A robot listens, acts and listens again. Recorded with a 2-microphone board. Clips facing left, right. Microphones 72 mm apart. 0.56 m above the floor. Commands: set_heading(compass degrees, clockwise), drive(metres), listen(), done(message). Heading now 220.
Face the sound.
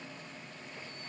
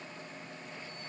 listen()
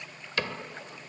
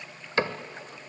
set_heading(255)
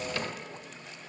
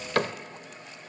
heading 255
set_heading(5)
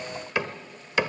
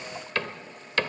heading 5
set_heading(350)
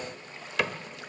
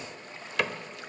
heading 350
done("Facing the cupboard door, 1 to 2 m away.")